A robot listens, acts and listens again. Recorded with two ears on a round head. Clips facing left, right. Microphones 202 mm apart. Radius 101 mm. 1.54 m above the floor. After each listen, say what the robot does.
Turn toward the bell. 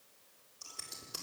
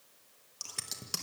Keep listening.
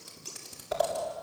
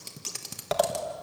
Keep listening.
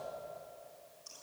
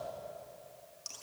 I can't make out a bell to turn to.